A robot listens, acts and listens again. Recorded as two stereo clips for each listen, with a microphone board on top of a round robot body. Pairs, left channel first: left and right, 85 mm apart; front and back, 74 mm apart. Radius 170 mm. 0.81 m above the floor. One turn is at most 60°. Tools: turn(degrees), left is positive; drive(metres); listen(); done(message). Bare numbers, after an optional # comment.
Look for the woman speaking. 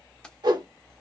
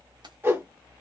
listen()
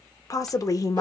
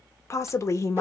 # The woman speaking: 45° left.
turn(45)
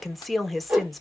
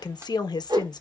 done("Facing the woman speaking.")